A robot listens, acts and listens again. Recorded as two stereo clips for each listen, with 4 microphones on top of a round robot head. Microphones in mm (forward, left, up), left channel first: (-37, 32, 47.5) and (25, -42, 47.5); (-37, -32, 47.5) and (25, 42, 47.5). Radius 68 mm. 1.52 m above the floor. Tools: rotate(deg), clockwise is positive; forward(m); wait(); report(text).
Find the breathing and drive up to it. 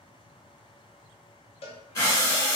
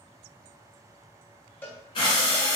rotate(165)
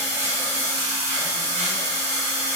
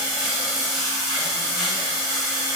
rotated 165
rotate(30)
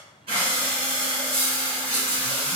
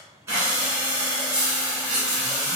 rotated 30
rotate(15)
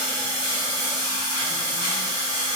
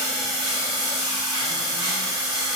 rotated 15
forward(1.0)
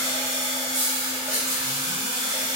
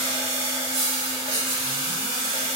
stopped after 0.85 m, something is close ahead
rotate(-10)
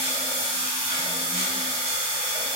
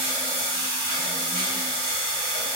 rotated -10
report("I am next to the breathing.")